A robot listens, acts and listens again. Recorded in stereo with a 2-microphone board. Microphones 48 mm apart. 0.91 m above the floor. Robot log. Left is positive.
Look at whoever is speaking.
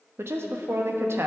note: The woman speaking: about 65° right or 115° right.
cmd yaw -65
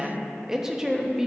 note: So it is at 10° right.
cmd yaw -10
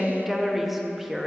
end: Facing the woman speaking, 1 to 2 m away.